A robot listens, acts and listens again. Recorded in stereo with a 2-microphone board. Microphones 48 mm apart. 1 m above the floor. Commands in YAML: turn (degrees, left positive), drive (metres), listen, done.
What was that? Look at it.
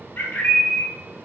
turn: 45
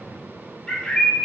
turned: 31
turn: 15
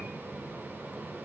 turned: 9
listen: true
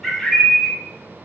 done: "Found it: a bird, straight ahead."